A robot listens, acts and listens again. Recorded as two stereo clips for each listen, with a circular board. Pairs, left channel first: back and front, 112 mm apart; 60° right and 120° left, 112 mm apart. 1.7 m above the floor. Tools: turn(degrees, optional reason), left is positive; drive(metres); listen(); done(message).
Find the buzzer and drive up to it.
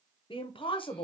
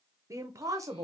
listen()
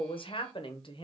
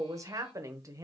listen()
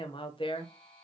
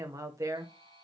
turn(degrees=-100, reason="The buzzer: 100° right.")
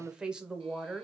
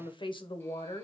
listen()
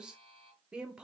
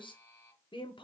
drive(metres=1.0)
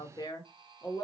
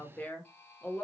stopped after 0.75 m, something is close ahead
done("Arrived at the buzzer, straight ahead.")